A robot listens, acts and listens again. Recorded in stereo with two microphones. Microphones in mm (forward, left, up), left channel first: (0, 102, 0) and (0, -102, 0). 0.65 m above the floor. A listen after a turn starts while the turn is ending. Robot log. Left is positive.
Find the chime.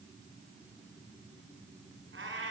cmd idle
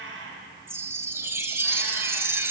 cmd yaw -30
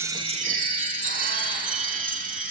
note: So it is at 140° right.
cmd yaw -140
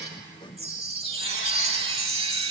note: The chime is now 30° right.
cmd yaw -30
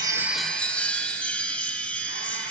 end: Found it: a chime, straight ahead.